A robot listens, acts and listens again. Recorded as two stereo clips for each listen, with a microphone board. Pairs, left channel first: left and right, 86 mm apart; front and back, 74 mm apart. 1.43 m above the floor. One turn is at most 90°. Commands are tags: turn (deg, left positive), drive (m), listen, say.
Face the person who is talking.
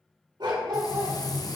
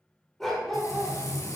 <listen/>
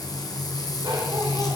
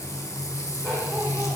<listen/>
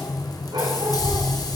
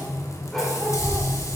<turn deg="-90"/>
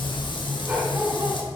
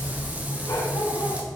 <turn deg="-85"/>
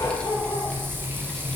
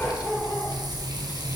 <turn deg="10"/>
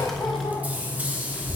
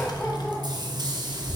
<say>Facing the child speaking.</say>